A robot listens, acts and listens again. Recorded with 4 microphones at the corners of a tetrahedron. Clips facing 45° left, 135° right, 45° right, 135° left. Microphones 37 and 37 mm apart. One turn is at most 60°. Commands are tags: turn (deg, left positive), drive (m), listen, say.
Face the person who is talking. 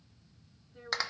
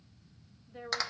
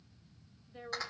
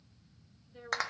<turn deg="-60"/>
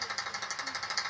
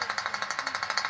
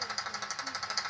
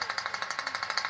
<turn deg="-60"/>
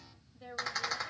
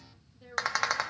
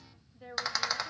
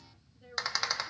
<turn deg="-25"/>
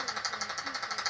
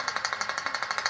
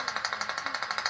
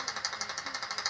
<listen/>
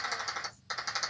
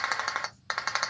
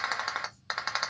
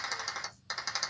<listen/>
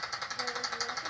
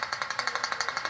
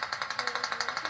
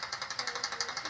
<say>I heard a woman speaking from this way, but can't make it out now.</say>